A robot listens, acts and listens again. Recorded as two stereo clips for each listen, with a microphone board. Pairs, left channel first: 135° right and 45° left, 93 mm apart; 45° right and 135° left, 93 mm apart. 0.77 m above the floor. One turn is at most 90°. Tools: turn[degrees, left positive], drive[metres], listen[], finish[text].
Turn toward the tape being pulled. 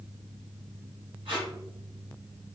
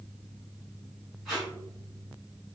Thought: The tape being pulled: 45° left.
Action: turn[45]
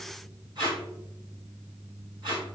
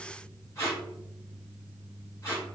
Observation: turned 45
Thought: The tape being pulled is now 15° left.
Action: turn[15]
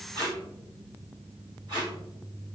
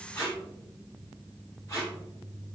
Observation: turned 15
Thought: The tape being pulled is now 10° left.
Action: turn[10]
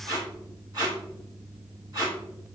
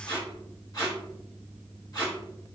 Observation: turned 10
Action: finish[Found it: tape being pulled, straight ahead.]